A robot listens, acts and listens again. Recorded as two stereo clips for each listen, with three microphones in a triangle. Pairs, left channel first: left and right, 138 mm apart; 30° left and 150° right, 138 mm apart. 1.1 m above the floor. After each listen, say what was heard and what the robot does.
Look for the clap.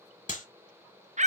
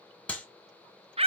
The clap: 110° left. Turn 110° left.
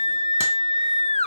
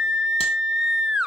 Keep listening.
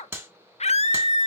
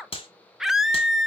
The clap is now 15° right. Turn 15° right.
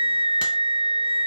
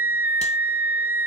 Keep listening.
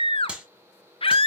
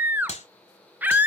Found it: a clap, straight ahead.